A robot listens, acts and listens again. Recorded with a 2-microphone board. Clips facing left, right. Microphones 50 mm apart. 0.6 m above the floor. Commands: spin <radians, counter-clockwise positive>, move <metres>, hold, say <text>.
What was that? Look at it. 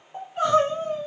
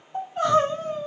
spin 0.52
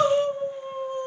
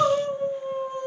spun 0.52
spin 2.44
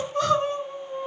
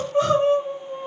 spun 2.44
spin -0.44
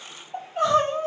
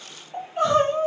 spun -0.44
say Facing the crying, 1 to 2 m away.